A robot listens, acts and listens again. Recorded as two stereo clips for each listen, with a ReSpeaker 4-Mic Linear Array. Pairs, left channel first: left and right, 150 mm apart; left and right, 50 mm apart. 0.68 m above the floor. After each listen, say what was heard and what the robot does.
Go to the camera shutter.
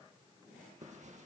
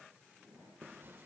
Keep listening.
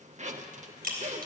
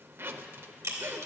Turn 90° right.
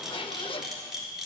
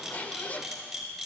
Drive 1.0 m forward.
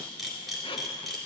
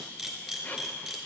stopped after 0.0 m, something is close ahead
Something is in my way. I am facing the camera shutter but have not reached it.